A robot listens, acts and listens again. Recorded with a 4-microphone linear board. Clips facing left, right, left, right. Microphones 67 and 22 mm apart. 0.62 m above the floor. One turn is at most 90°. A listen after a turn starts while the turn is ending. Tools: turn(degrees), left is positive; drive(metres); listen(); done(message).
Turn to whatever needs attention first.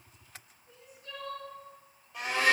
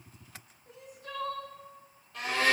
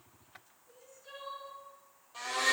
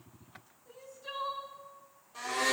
turn(degrees=-90)
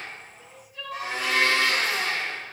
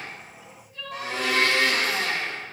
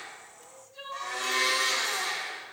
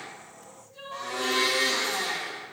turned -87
done("Found it: crying, straight ahead.")